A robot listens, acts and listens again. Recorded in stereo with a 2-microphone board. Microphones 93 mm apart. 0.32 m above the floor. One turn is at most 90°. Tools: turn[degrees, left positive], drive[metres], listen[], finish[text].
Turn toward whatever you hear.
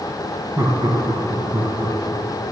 Thought: The laughter: about 60° right or 120° right.
Action: turn[-60]
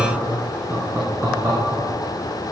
Thought: So it is at 35° right.
Action: turn[-35]
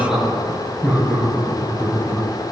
Thought: The laughter is now 10° right.
Action: turn[-10]
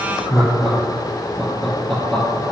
Action: finish[Facing the laughter, over 4 m away.]